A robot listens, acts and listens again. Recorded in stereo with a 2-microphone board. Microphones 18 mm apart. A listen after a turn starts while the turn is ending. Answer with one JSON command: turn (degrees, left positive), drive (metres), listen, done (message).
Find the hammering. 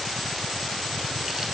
{"listen": true}
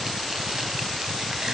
{"listen": true}
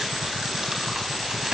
{"done": "I can't make out hammering to turn to."}